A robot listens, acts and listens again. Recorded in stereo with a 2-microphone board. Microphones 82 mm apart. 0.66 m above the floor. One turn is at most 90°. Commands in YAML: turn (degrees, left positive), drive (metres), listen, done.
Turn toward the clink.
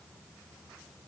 listen: true
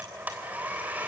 listen: true
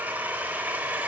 done: "I can't make out a clink, only a blender."